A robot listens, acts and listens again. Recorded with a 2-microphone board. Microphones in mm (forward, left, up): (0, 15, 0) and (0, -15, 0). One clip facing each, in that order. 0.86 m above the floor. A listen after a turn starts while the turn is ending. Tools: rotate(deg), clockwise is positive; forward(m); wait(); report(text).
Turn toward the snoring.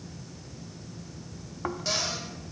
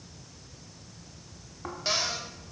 rotate(-25)
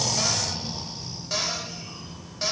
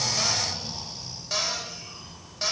report("Found it: snoring, straight ahead.")